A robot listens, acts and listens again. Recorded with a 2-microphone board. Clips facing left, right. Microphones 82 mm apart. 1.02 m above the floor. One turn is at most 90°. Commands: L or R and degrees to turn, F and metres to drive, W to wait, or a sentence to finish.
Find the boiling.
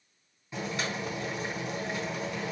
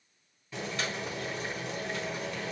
L15
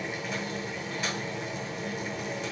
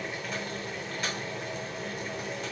Found it: boiling, straight ahead.